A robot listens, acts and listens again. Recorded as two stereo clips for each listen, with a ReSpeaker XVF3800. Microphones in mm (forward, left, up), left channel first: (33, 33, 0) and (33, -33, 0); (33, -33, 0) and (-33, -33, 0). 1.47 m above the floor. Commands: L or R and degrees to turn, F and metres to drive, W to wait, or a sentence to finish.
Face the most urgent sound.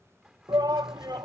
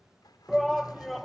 R90
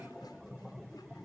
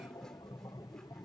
Found it: a shout, straight ahead.